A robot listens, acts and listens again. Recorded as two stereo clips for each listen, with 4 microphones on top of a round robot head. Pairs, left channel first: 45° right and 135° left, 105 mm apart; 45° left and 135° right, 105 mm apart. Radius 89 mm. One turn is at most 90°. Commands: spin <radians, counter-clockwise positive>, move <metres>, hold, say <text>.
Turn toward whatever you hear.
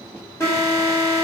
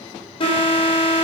spin 0.35
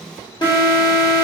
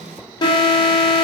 say Found it: an alarm, straight ahead, 2 to 4 m away.